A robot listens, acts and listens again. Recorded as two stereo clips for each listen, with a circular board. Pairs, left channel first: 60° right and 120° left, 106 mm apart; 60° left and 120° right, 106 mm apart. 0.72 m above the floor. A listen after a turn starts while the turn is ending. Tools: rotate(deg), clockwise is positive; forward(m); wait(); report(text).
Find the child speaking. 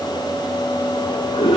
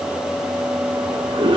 wait()
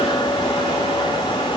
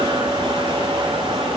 wait()
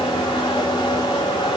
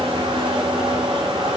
report("I can't make out a child speaking, only a toilet flushing.")